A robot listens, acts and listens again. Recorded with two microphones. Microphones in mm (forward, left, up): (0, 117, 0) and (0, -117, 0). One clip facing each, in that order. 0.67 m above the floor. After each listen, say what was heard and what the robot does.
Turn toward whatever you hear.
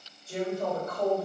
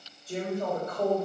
The woman speaking: about 35° right or 145° right. Turn 35° right.
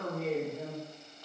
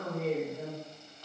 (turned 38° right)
So it is at 20° right. Turn 20° right.
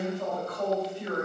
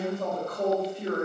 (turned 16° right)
The woman speaking is now 40° right. Turn 40° right.
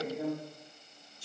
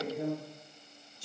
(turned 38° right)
The woman speaking is now 30° right. Turn 30° right.
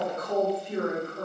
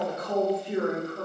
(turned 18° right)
The woman speaking is now 25° right. Turn 25° right.
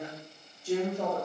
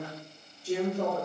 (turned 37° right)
The woman speaking is now 10° left. Turn 10° left.
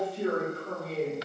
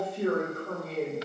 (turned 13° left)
Facing the woman speaking, 2 to 4 m away.